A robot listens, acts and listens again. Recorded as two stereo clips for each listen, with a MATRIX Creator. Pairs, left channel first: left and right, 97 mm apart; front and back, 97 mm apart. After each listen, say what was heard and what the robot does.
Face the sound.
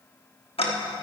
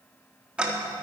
The ticking: 100° left. Turn 100° left.
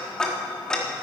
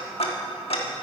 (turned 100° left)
The ticking is now 10° left. Turn 10° left.
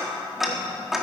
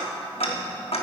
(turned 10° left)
Facing the ticking, 1 to 2 m away.